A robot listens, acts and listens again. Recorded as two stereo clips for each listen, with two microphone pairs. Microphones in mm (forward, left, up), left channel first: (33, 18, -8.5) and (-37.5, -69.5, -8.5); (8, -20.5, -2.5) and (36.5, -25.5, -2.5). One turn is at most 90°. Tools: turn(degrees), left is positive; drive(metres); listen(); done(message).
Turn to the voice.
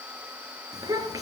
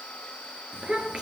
turn(degrees=-70)
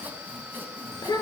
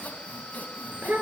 done("Facing the child speaking, 2 to 4 m away.")